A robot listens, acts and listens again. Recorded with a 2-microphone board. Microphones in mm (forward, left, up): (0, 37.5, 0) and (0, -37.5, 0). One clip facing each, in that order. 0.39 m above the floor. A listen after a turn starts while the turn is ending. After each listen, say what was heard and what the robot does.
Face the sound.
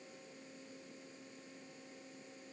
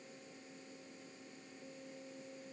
Keep listening.
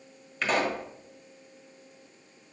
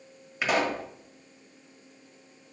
Turn 30° right.
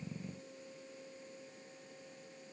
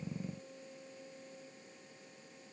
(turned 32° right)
Keep listening.
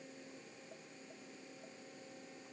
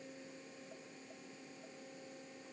I heard a pop, but can't make it out now. It was about 20° left or 140° right.